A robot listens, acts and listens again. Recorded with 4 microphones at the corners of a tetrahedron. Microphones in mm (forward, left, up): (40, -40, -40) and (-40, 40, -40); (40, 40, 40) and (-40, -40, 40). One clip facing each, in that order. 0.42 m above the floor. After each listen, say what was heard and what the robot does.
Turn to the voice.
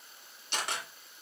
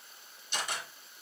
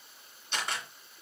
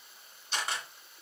Keep listening.
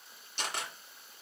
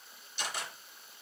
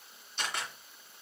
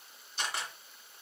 Keep listening.
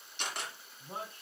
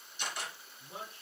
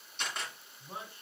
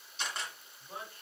The man speaking: 20° right. Turn 20° right.
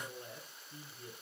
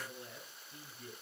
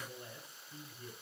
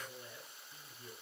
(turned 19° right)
Found it: a man speaking, straight ahead.